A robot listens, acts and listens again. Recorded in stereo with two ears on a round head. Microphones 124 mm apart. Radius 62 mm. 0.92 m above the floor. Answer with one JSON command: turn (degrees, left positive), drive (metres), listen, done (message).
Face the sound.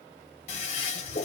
{"turn": 50}
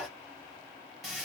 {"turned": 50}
{"done": "Found it: a toilet flushing, straight ahead, 1 to 2 m away."}